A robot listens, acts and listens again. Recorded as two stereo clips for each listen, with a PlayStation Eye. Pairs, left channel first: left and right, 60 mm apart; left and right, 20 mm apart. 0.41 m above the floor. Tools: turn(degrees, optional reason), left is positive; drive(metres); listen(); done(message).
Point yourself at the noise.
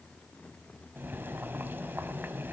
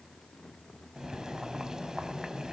turn(degrees=-35, reason="The boiling: about 35° right or 145° right.")
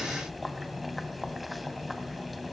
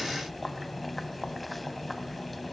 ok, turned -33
done("Facing the boiling.")